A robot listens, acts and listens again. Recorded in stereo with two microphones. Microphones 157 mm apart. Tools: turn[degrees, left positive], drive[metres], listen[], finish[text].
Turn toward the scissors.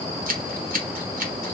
Thought: The scissors: about 65° right or 115° right.
Action: turn[-65]
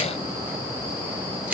Thought: So it is at 10° right.
Action: turn[-10]
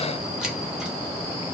Action: finish[Found it: scissors, straight ahead, 1 to 2 m away.]